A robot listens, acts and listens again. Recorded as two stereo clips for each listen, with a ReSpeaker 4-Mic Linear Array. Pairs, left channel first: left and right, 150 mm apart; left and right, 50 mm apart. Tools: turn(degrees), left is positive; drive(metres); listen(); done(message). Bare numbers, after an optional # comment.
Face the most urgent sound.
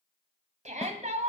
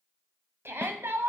# The shout: about 55° right or 125° right.
turn(-55)
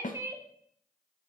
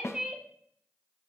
# So it is at 25° right.
turn(-25)
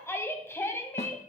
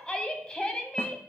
# The shout is now 20° left.
turn(20)
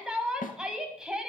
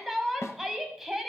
done("Facing the shout.")